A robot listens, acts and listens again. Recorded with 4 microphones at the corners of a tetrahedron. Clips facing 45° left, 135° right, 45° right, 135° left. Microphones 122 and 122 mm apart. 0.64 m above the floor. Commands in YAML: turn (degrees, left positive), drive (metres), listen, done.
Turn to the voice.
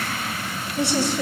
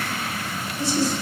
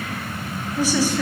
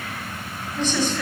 turn: 35
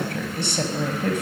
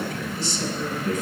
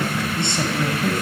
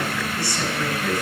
turn: 20
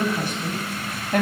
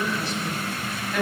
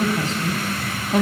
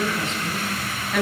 turn: 10
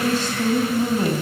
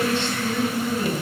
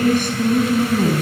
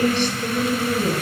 done: "Found it: a woman speaking, straight ahead."